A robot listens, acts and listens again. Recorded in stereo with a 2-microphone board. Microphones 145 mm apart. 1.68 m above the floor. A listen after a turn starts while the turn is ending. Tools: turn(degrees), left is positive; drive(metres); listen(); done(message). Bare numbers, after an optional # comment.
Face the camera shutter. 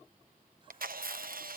turn(-90)
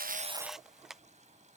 done("Found it: a camera shutter, straight ahead.")